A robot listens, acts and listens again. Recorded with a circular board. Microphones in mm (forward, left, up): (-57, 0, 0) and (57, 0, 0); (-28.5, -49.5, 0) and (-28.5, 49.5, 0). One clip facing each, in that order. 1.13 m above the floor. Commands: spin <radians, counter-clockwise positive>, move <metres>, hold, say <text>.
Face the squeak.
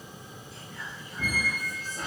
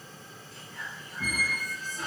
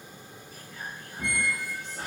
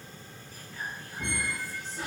spin -2.44
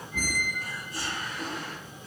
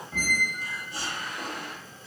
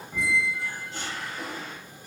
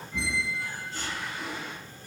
spin -0.70
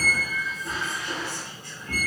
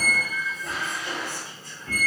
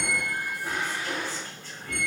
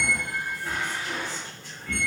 spin -0.26
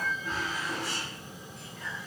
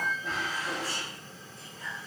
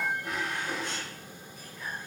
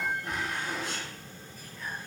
say Found it: a squeak, straight ahead, under 1 m away.